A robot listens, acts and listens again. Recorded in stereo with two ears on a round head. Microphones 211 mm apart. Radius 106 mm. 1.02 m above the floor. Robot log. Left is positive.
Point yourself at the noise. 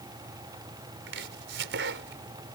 note: The chopping: about 55° right or 125° right.
cmd yaw -55
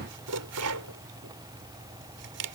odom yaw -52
note: So it is at 70° right.
cmd yaw -70
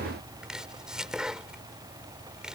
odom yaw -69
end: Facing the chopping.